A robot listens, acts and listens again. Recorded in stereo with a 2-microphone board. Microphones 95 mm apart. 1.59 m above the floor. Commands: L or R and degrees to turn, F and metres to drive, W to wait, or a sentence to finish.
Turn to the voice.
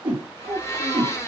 R65
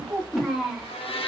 Facing the child speaking.